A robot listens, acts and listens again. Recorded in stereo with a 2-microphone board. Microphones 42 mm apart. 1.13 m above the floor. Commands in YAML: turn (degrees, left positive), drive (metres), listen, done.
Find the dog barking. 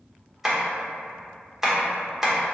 listen: true
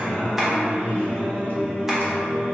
listen: true
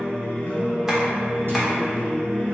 done: "I can't make out a dog barking, only tapping and singing."